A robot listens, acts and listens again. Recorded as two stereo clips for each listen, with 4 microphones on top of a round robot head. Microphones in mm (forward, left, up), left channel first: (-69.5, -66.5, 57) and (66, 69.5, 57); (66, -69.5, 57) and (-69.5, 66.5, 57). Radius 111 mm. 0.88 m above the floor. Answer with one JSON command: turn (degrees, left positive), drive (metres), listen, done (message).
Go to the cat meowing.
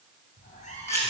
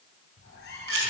{"turn": -80}
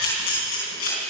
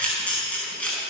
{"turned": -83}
{"listen": true}
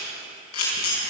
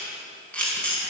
{"listen": true}
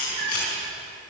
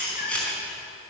{"drive": 1.0}
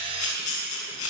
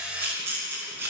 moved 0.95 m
{"listen": true}
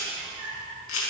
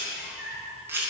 {"drive": 1.0}
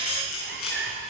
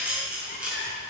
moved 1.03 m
{"drive": 1.0}
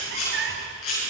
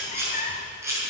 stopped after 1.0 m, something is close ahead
{"turn": 10}
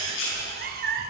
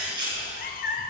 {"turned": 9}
{"done": "I am next to the cat meowing."}